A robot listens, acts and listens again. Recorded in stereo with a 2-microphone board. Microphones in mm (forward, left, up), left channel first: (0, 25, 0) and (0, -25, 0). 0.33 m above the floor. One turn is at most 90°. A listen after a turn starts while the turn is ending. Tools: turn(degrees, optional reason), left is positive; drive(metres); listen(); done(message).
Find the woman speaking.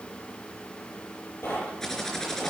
listen()
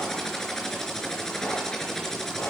listen()
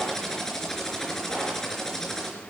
done("I can't make out a woman speaking, only typing on a keyboard and knocking.")